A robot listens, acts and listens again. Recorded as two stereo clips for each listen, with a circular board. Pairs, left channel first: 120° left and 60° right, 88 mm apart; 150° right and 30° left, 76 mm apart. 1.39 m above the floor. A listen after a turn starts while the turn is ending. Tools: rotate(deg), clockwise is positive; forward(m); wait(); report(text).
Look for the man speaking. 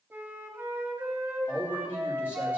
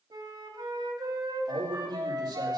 rotate(-50)
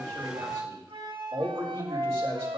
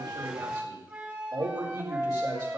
report("Facing the man speaking.")